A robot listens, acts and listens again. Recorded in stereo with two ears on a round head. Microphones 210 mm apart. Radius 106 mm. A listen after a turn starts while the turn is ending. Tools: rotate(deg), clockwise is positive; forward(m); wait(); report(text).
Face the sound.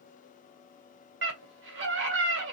rotate(55)
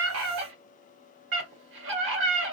rotate(60)
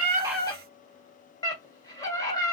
rotate(-15)
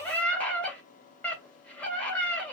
report("Found it: a scream, straight ahead.")